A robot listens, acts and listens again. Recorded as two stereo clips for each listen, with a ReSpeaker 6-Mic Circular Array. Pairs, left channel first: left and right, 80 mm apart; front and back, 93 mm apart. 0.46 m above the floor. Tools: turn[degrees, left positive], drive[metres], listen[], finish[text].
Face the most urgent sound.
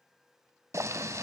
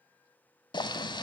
Action: listen[]
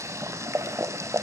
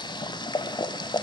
Action: listen[]
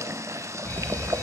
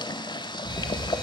Thought: The fire alarm: 30° left.
Action: turn[30]
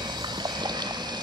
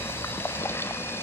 Action: finish[Facing the fire alarm.]